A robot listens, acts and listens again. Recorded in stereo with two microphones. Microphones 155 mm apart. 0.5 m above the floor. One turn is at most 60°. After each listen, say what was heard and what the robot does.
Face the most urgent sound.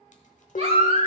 The baby crying: about 45° right or 135° right. Turn 45° right.
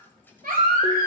So it is at 90° right. Turn 60° right.
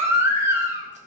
The baby crying is now 15° right. Turn 15° right.
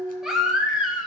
Facing the baby crying.